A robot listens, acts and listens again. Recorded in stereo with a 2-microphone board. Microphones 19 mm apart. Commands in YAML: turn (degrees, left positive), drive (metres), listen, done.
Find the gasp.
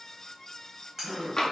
turn: -65
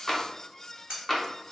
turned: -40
listen: true
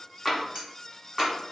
done: "I heard a gasp, but can't make it out now. It was about 25° right or 75° right."